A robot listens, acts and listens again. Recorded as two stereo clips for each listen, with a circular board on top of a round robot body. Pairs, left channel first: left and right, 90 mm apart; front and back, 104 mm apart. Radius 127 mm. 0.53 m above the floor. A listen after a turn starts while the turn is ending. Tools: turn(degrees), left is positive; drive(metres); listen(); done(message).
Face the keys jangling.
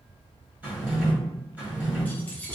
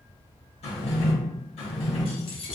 turn(degrees=10)
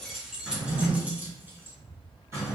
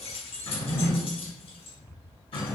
turn(degrees=-25)
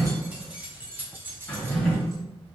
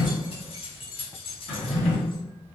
turn(degrees=-25)
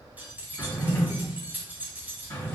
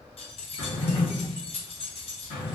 turn(degrees=-20)
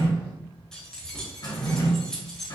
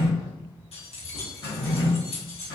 done("Found it: keys jangling, straight ahead, 1 to 2 m away.")